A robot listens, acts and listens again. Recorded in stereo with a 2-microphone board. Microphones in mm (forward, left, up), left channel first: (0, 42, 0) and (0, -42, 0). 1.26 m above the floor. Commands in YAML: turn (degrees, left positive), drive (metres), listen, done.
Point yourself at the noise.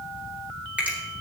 turn: -15
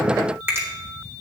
turn: -150
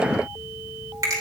turn: -40
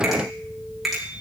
done: "Facing the finger snap."